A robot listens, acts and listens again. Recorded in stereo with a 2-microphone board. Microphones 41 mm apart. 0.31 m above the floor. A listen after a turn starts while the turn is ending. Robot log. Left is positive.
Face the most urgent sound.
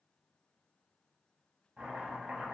cmd idle
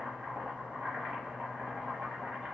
cmd idle
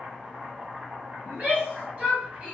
note: The shout: about 35° right or 145° right.
cmd yaw -35
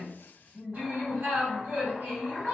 note: So it is at 105° right.
cmd yaw -105
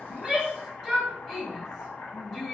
note: The shout is now 15° right.
cmd yaw -15
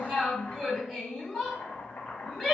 end: Facing the shout.